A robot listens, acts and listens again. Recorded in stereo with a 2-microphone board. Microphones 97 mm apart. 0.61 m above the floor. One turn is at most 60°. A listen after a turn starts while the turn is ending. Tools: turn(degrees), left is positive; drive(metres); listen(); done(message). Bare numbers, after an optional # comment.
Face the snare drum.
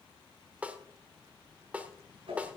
turn(-30)
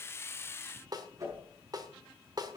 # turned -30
# So it is at 135° right.
turn(-60)
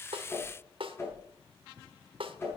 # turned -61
# The snare drum is now 75° right.
turn(-60)
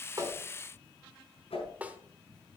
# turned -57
# The snare drum is now 15° right.
turn(-15)
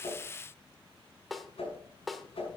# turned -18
done("Facing the snare drum, 1 to 2 m away.")